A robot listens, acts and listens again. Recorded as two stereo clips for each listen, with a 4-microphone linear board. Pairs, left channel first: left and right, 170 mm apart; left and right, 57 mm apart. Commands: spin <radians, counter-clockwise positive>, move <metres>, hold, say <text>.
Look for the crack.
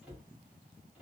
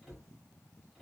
hold
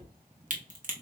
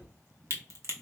spin -0.87
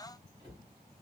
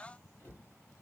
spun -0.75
hold
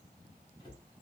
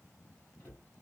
say I heard a crack, but can't make it out now. It was about 10° right or 85° right.